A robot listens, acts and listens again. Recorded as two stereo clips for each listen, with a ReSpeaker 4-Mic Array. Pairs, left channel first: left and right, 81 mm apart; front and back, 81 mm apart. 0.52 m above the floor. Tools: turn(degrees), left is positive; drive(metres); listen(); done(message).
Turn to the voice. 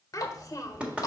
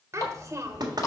turn(degrees=135)
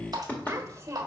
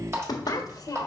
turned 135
turn(degrees=-35)
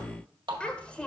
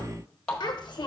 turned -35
turn(degrees=15)
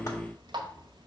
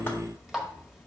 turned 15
listen()
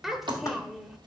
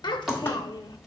done("Found it: a child speaking, straight ahead, 1 to 2 m away.")